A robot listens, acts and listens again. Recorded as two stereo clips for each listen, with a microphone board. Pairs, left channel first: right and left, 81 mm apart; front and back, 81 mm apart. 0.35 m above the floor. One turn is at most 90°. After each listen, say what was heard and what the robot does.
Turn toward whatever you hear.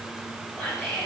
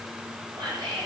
The whispering: 165° left. Turn 90° left.
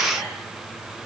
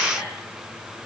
Nothing new. It was at 75° left. Turn 75° left.
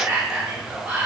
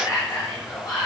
Found it: whispering, straight ahead, 1 to 2 m away.